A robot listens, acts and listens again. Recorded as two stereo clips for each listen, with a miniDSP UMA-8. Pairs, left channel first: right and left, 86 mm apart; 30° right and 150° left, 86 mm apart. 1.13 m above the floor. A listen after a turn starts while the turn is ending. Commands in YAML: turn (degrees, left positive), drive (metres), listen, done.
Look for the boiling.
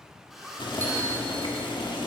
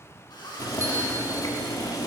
turn: -75
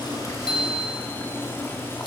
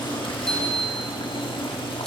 turn: -30
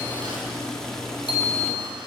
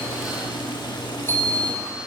done: "Found it: boiling, straight ahead, 1 to 2 m away."